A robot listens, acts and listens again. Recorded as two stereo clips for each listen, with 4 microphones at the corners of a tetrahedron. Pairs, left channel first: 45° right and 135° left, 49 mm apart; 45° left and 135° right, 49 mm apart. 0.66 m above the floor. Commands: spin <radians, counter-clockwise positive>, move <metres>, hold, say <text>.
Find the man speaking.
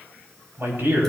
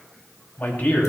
spin 1.66
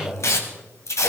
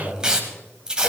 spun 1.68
say Found it: a man speaking, straight ahead.